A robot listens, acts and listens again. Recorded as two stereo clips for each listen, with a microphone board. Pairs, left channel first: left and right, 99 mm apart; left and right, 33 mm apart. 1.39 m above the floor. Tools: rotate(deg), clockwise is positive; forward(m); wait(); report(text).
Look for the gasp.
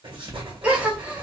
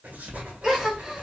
rotate(30)
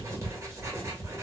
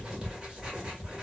wait()
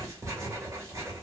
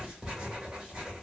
report("I heard a gasp, but can't make it out now. It was about 20° left or 140° right.")